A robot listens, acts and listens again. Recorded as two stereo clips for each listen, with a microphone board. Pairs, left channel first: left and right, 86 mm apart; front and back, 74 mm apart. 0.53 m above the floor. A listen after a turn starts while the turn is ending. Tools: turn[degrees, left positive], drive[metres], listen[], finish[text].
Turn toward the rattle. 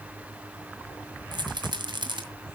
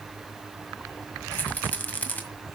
Thought: The rattle: 65° right.
Action: turn[-65]
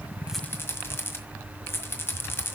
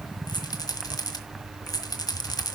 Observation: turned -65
Thought: The rattle is now 30° left.
Action: turn[30]
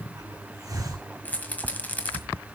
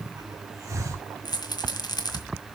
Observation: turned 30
Thought: The rattle is now 20° left.
Action: turn[20]
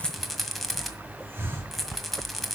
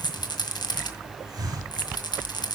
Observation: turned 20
Action: finish[Facing the rattle, 1 to 2 m away.]